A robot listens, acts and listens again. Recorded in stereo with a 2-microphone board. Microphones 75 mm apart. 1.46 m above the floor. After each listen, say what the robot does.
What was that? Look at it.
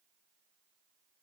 Keep listening.
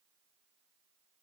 Keep listening.
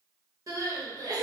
Turn 50° right.
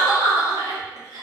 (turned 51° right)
Turn 65° right.
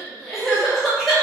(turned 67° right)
Found it: crying, straight ahead, under 1 m away.